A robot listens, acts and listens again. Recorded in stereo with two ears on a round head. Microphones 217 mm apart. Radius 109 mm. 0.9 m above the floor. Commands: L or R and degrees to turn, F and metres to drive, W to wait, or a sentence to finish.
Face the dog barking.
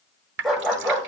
L30
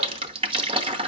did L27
W
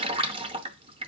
W
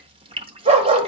R30
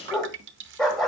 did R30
Facing the dog barking.